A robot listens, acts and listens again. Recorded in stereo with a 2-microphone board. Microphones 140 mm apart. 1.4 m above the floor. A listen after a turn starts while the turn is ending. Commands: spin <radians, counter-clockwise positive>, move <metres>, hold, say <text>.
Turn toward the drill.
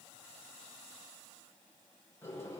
hold
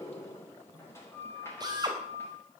spin -0.52
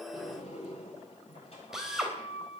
say Facing the drill.